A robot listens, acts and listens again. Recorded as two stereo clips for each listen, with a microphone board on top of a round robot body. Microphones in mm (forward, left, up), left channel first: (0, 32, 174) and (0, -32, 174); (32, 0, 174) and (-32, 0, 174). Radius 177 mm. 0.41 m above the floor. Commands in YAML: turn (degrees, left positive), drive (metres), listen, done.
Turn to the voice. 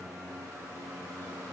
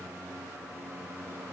listen: true
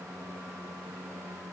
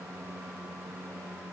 listen: true
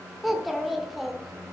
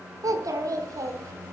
turn: 180
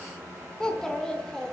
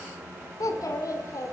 turn: 10
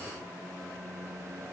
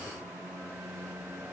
listen: true
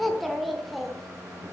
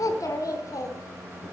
done: "Found it: a child speaking, straight ahead."